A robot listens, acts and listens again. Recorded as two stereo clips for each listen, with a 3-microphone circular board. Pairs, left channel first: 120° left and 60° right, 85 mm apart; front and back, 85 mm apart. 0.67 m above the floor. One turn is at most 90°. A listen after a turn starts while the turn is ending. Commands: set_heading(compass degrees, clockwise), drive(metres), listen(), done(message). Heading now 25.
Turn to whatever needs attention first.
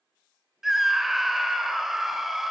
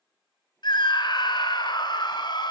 set_heading(0)
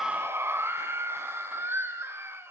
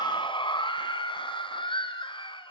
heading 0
done("Facing the scream.")